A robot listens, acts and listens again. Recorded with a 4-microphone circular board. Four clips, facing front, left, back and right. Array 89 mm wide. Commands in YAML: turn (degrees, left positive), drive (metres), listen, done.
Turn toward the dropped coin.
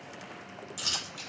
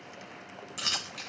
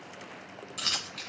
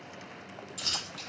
turn: 115
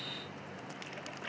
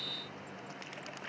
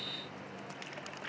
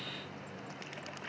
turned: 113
done: "Facing where the dropped coin came from. I can't hear it now."